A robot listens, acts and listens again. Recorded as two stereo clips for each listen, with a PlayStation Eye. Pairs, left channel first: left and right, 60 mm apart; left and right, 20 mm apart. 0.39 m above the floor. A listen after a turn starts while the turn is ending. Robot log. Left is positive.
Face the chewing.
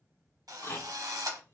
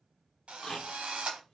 note: The chewing: about 40° left or 140° left.
cmd yaw +40
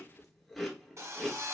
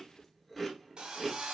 end: Facing the chewing, 1 to 2 m away.